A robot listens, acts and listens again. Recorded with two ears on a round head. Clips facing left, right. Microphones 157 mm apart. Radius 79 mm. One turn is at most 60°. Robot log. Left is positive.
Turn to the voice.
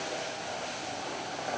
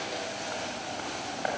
cmd idle
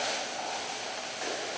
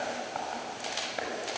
cmd idle
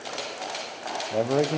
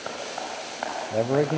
cmd yaw +30
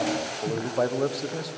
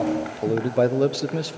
note: So it is at 30° right.
cmd yaw -30
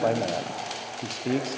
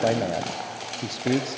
note: The man speaking is now 10° right.
cmd yaw -10
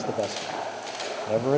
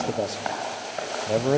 end: Found it: a man speaking, straight ahead.